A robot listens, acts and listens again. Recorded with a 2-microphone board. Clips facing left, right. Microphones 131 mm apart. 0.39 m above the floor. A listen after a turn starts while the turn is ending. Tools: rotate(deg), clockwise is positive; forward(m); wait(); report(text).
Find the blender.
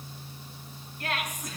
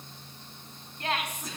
wait()
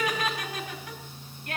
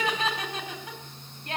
wait()
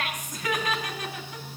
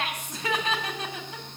report("I can't make out a blender to turn to.")